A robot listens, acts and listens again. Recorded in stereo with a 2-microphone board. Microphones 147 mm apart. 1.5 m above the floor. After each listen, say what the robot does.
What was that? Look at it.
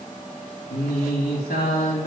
Turn 90° left.
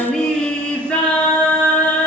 Turn 10° left.
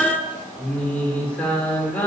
Turn 10° left.
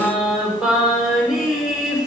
Found it: singing, straight ahead.